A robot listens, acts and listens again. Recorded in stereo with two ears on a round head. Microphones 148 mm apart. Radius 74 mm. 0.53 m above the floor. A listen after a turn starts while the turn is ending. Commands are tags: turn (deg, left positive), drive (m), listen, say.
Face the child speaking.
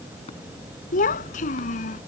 <turn deg="50"/>
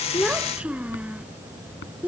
<turn deg="-10"/>
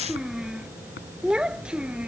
<say>Found it: a child speaking, straight ahead.</say>